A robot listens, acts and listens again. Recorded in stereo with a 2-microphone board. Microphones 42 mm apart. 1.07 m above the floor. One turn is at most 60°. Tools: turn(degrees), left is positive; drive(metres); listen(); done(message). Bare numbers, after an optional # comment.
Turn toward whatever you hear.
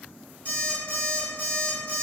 # The alarm clock: about 50° left or 130° left.
turn(50)
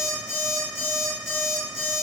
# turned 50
done("Found it: an alarm clock, straight ahead, 1 to 2 m away.")